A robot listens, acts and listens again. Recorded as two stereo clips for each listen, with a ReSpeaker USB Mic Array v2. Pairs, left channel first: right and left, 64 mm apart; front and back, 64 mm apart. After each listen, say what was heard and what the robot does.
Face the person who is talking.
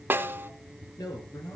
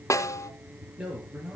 The man speaking: 105° right. Turn 105° right.
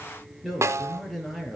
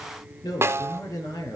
Facing the man speaking, over 4 m away.